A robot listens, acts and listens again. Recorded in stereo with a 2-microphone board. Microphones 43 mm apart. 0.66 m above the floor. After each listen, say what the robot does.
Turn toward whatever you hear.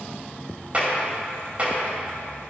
Turn 30° right.
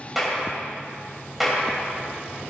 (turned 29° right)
Found it: a clap, straight ahead.